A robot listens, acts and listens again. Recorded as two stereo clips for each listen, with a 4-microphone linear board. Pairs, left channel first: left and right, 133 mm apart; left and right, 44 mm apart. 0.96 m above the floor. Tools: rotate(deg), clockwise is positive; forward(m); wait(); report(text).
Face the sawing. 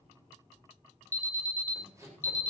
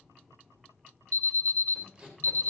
rotate(25)
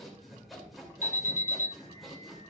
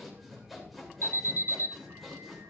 report("Facing the sawing, 2 to 4 m away.")